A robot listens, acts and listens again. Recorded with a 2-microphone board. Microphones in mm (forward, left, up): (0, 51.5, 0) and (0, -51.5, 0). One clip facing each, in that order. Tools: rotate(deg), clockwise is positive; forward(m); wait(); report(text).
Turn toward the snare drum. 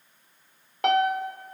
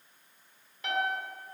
wait()
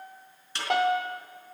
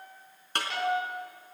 rotate(50)
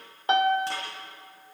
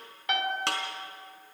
rotate(80)
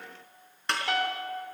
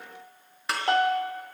report("Found it: a snare drum, straight ahead.")